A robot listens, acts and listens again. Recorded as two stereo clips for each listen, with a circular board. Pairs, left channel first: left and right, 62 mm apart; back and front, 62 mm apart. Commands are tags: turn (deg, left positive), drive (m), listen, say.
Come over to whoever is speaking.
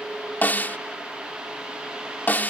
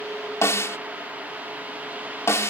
<listen/>
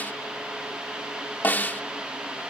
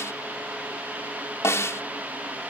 <listen/>
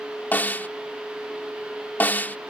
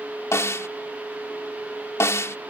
<say>I can't make out anyone speaking to turn to.</say>